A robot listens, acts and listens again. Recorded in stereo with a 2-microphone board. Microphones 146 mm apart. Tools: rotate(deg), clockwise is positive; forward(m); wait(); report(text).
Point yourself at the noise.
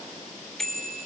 rotate(-30)
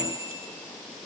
rotate(25)
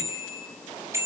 rotate(20)
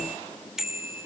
report("Found it: a bicycle bell, straight ahead.")